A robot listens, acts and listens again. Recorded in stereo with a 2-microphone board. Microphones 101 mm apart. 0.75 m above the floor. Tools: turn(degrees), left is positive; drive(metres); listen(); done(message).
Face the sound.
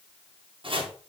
turn(degrees=-65)
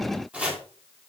turn(degrees=-15)
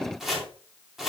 done("Found it: chopping, straight ahead.")